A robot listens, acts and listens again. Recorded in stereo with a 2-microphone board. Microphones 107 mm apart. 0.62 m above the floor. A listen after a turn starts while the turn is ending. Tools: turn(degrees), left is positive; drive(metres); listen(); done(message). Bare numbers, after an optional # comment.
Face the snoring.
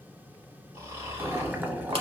# The snoring: about 25° right or 155° right.
turn(-25)
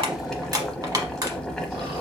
listen()
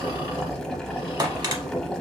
listen()
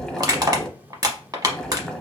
done("I heard snoring, but can't make it out now. It was about straight ahead or 130° right.")